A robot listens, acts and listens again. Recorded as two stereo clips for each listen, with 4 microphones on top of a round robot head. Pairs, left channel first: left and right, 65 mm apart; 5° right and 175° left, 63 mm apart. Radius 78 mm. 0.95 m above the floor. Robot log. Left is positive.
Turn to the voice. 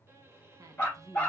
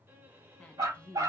note: The woman speaking: 75° right.
cmd yaw -75
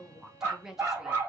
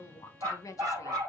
note: The woman speaking is now 10° right.
cmd yaw -10
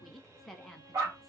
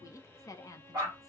end: Found it: a woman speaking, straight ahead.